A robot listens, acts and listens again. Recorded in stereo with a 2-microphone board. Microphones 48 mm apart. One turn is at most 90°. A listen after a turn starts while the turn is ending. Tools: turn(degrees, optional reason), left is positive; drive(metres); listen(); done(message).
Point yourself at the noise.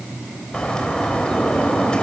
turn(degrees=20, reason="The bird: about 20° left or 160° left.")
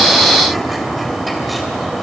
done("Found it: a bird, straight ahead, 2 to 4 m away.")